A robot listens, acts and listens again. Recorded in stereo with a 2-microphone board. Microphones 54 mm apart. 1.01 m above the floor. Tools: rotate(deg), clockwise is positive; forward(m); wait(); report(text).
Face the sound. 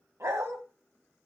rotate(65)
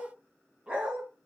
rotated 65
rotate(20)
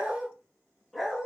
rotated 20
report("Facing the dog barking, 2 to 4 m away.")